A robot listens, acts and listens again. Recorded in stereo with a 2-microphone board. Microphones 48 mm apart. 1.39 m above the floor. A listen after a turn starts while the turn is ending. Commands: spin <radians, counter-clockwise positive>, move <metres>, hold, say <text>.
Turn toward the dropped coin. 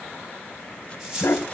spin -0.26
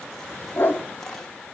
hold
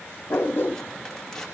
say I heard a dropped coin, but can't make it out now. It was about straight ahead or 150° right.